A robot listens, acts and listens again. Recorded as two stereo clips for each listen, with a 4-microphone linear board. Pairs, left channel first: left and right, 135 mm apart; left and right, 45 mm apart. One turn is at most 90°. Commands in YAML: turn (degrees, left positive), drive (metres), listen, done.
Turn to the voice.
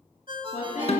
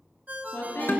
turn: 65
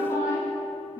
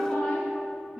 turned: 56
turn: 25
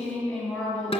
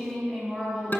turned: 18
done: "Facing the woman speaking."